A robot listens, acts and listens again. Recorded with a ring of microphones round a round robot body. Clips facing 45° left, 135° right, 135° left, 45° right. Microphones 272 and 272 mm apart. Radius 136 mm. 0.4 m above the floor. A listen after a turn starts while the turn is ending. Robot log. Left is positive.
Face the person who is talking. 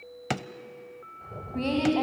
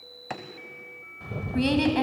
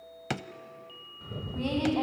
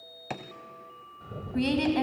note: The woman speaking: 85° right.
cmd yaw -85
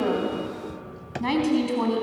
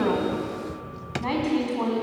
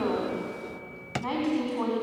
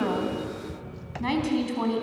end: Found it: a woman speaking, straight ahead, over 4 m away.